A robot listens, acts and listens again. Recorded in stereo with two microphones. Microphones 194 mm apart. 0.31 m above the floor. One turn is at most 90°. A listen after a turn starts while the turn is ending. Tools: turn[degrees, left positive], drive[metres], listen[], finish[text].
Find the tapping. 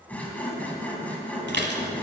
Action: listen[]
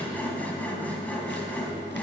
Action: listen[]
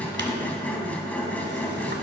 Action: finish[I can't make out tapping, only sawing and dishes clattering.]